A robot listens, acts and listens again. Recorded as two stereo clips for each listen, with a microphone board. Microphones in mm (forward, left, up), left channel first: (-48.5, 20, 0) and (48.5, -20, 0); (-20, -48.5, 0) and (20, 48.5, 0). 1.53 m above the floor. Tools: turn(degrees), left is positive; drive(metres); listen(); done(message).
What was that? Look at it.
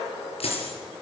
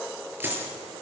turn(degrees=140)
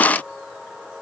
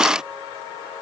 done("I heard a dropped coin from this way, but can't make it out now.")